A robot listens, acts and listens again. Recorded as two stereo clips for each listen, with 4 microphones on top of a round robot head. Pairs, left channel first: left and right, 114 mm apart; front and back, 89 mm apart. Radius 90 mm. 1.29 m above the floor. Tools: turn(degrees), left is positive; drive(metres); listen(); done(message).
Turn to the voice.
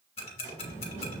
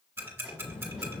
turn(degrees=-60)
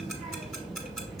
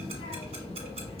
done("Found it: a child speaking, straight ahead, 1 to 2 m away.")